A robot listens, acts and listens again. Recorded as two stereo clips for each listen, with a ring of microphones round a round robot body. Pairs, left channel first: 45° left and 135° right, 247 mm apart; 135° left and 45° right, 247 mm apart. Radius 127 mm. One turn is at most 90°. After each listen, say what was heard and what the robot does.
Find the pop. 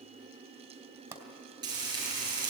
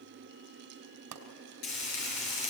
The pop: 55° right. Turn 55° right.
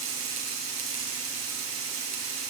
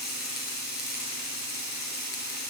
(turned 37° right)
Nothing new. It was at 20° right. Turn 20° right.
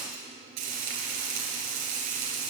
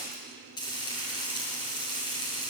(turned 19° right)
Facing where the pop came from. I can't hear it now.